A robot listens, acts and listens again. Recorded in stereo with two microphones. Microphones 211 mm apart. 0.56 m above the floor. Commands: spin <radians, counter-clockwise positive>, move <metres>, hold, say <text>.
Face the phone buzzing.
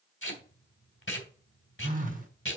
spin -0.70
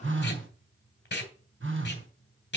spin -1.75
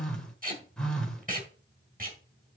say Facing the phone buzzing.